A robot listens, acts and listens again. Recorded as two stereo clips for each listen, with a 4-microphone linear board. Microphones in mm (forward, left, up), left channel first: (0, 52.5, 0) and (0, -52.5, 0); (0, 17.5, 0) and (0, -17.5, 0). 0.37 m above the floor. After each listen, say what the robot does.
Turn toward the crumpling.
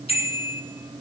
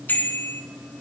Keep listening.
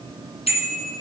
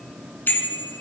Keep listening.
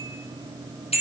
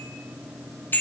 I can't make out crumpling, only a bicycle bell.